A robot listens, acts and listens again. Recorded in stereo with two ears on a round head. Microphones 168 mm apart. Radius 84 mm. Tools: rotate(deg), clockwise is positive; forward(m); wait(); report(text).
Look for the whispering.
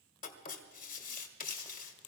wait()
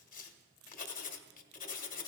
wait()
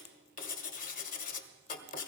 report("I can't make out whispering, only writing.")